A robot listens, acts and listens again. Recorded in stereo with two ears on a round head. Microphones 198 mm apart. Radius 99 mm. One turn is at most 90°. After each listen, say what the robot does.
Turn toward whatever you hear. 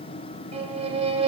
Turn 25° right.
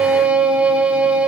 Turn 10° right.
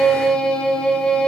Found it: a violin, straight ahead, under 1 m away.